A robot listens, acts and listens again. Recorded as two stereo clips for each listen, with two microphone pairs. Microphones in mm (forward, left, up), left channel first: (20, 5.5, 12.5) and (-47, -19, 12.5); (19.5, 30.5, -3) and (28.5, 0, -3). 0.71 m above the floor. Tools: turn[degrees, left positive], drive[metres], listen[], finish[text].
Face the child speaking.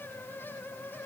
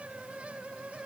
Action: listen[]
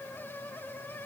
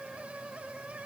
Action: listen[]
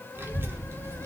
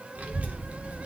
Thought: The child speaking: 110° right.
Action: turn[-110]
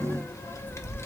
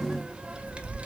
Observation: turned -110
Thought: The child speaking is now 30° right.
Action: turn[-30]
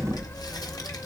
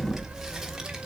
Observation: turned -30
Action: finish[Found it: a child speaking, straight ahead.]